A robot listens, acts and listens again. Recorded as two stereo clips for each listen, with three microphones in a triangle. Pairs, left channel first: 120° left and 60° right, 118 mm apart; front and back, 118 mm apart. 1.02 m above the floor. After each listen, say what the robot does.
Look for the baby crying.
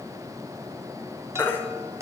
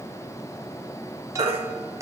Turn 170° right.
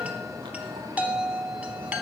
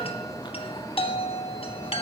Keep listening.
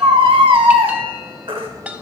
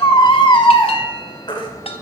Turn 35° right.
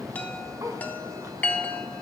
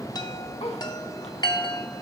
Keep listening.
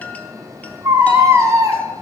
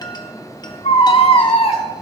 Found it: a baby crying, straight ahead.